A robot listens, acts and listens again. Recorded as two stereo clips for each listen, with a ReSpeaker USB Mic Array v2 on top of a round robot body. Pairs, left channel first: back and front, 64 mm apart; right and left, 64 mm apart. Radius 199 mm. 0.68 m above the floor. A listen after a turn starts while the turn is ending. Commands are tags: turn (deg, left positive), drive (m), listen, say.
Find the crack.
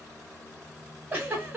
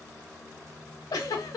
<listen/>
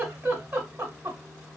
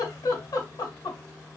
<listen/>
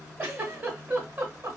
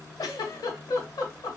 <say>I can't make out a crack to turn to.</say>